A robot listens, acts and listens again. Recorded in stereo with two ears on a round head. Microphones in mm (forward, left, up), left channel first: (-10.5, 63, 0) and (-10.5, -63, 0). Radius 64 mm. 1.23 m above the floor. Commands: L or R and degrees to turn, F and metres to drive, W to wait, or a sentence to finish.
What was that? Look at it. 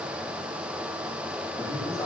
L30
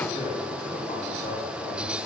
L125
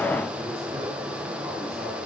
R25
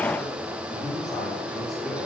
Found it: a man speaking, straight ahead.